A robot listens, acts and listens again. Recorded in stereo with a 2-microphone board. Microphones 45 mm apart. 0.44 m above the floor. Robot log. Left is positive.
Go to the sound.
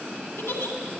note: The giggle: about 70° left or 110° left.
cmd yaw +70
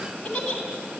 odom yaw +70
note: So it is at 20° left.
cmd yaw +20
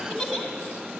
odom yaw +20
cmd fwd 1.0
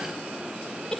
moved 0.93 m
cmd fwd 1.0
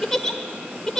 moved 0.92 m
note: The giggle is now 15° left.
cmd yaw +15
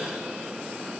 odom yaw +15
cmd idle
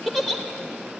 cmd fwd 1.0
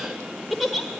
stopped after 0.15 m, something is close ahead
end: I am next to the giggle.